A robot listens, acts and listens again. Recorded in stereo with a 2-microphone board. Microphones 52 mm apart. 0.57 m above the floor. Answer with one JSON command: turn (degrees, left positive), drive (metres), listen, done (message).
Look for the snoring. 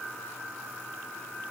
{"listen": true}
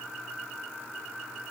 {"listen": true}
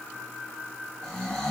{"turn": 30}
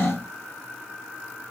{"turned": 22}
{"turn": 145}
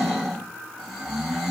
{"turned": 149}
{"done": "Found it: snoring, straight ahead."}